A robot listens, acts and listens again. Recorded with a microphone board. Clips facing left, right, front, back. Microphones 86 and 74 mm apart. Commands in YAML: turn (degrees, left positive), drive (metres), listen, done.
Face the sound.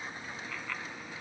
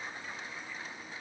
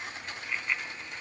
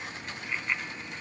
turn: 100
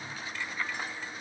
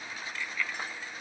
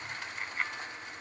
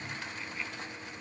turn: 35
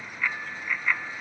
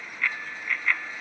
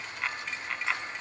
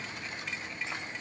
turn: 10
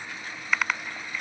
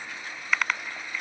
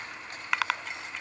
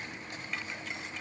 done: "Facing the bicycle bell."